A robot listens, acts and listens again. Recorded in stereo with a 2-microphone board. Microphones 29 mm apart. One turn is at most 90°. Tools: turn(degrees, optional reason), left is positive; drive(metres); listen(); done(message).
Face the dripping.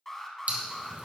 turn(degrees=-60, reason="The dripping: about 60° right or 120° right.")
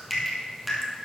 done("Found it: dripping, straight ahead.")